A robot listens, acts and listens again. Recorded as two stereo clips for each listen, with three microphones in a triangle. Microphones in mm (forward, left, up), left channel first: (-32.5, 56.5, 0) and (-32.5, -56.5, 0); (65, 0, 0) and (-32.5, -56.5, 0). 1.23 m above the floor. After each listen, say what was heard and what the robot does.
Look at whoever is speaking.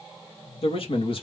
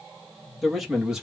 The man speaking: 125° left. Turn 125° left.
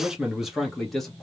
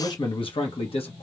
Facing the man speaking, 1 to 2 m away.